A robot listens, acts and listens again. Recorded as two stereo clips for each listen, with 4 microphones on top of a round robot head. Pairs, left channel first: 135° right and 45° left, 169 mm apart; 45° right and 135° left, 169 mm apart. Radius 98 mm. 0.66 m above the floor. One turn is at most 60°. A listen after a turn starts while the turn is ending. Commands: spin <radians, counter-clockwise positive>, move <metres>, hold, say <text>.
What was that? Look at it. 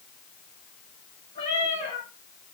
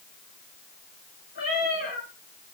spin -1.05
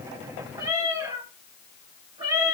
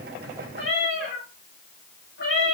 spin -0.35
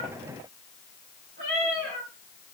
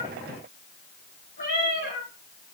say Found it: a cat meowing, straight ahead.